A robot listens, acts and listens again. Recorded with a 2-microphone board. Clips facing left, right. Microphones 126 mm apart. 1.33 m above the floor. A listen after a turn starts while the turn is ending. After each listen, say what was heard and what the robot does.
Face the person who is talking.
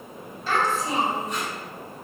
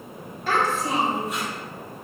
The child speaking: about 65° right or 115° right. Turn 65° right.
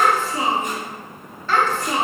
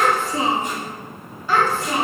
Facing the child speaking.